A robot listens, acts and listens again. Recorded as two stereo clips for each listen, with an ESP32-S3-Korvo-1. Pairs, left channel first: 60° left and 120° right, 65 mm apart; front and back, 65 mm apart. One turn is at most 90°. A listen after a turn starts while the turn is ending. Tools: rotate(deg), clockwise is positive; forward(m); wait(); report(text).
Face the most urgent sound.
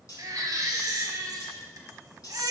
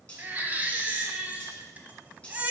rotate(90)
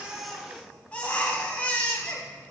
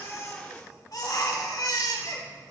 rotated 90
rotate(10)
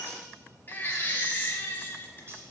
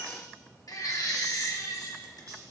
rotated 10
report("Found it: a baby crying, straight ahead.")